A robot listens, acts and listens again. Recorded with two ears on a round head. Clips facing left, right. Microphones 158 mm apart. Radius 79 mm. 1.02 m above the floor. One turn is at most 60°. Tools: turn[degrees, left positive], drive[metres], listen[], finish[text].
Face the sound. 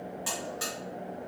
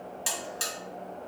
Thought: The buzzer: about 40° right or 140° right.
Action: turn[-40]
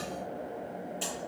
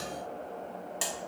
Thought: So it is at 100° right.
Action: turn[-60]
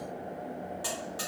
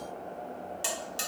Thought: The buzzer is now 35° right.
Action: turn[-35]
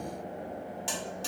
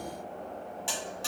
Action: finish[Found it: a buzzer, straight ahead, 1 to 2 m away.]